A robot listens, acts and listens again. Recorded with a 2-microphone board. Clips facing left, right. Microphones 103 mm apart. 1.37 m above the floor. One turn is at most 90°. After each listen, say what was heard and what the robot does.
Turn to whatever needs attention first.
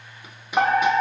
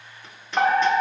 Turn 30° left.
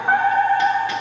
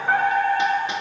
So it is at 135° left. Turn 90° left.
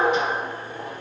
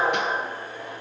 The fire alarm is now 40° left. Turn 40° left.
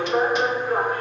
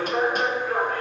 The fire alarm is now 25° left. Turn 25° left.
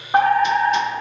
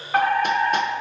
The fire alarm is now 25° left. Turn 25° left.
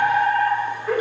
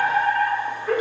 Facing the fire alarm.